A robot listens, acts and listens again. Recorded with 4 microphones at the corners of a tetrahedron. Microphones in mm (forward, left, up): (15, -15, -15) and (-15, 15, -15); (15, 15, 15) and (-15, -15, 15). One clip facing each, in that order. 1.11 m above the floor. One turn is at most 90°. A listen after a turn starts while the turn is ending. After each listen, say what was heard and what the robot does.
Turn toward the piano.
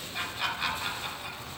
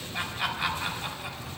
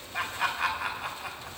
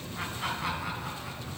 Keep listening.
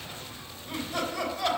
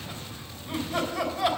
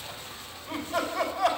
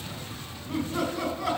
Keep listening.
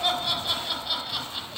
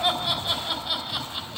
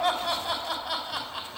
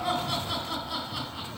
I can't make out a piano, only laughter.